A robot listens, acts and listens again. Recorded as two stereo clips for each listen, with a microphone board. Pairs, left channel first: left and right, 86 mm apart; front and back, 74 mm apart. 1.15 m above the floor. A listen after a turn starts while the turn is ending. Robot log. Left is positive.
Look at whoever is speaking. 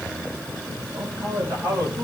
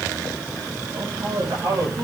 note: The man speaking: 150° right.
cmd yaw -150
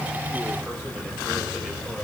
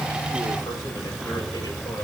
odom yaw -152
cmd idle
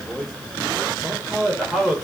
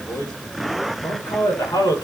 end: Found it: a man speaking, straight ahead, over 4 m away.